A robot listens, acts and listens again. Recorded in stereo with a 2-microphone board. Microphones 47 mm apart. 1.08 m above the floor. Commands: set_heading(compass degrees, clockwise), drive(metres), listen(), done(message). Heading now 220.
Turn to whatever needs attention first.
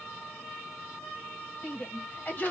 set_heading(185)
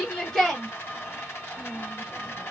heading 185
set_heading(175)
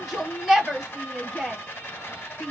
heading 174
done("Found it: a shout, straight ahead, 1 to 2 m away.")